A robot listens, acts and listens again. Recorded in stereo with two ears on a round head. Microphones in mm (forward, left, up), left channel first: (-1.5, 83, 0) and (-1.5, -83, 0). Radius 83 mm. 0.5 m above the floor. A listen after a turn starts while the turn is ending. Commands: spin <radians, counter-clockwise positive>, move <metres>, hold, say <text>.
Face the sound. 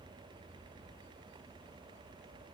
hold
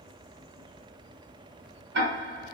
spin -1.05
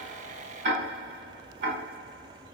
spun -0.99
spin -1.05
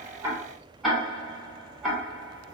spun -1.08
say Found it: ticking, straight ahead, 1 to 2 m away.